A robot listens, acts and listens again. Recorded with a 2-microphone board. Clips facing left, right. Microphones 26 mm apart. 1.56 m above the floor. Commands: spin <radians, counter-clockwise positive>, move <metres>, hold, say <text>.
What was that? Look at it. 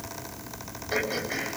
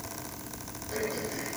spin 1.22
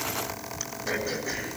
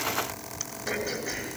say Facing the throat clearing.